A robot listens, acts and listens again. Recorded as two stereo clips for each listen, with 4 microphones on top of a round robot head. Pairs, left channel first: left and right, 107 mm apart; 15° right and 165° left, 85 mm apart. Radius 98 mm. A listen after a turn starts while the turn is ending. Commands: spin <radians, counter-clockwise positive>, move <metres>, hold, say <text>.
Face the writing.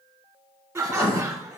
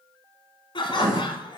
spin 2.27
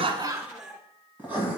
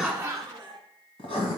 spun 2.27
spin -0.26
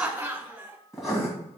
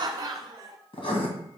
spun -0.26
say Found it: writing, straight ahead.